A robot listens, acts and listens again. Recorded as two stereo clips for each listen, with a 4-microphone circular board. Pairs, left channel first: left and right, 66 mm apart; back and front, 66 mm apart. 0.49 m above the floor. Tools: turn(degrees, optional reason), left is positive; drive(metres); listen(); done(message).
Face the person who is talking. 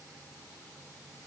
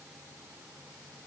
listen()
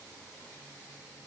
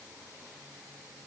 listen()
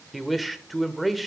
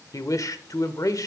turn(degrees=180, reason="The man speaking: straight behind.")
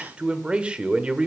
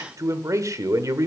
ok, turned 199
turn(degrees=-20, reason="The man speaking is now 20° right.")
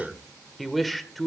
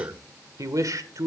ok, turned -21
done("Found it: a man speaking, straight ahead, 1 to 2 m away.")